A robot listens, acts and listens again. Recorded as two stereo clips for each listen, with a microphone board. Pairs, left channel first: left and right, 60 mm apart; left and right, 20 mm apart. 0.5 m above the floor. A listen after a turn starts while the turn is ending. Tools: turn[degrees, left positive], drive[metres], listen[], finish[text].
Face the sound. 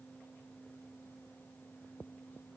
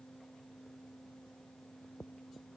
Action: listen[]
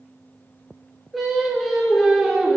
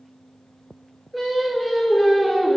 Action: turn[-30]
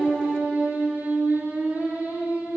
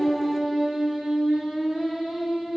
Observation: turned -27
Thought: So it is at 145° right.
Action: turn[-145]
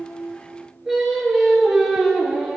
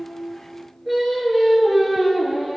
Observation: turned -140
Action: finish[Found it: singing, straight ahead, over 4 m away.]